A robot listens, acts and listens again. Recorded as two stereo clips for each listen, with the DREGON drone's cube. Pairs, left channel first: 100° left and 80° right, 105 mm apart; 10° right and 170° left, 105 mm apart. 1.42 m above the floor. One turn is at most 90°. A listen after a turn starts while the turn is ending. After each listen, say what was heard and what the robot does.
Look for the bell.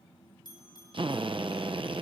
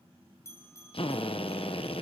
The bell: 50° left. Turn 50° left.
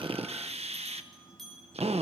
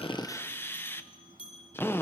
The bell is now 15° left. Turn 15° left.
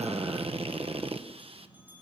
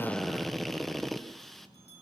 Keep listening.
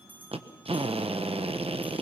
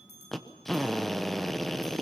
Facing the bell, over 4 m away.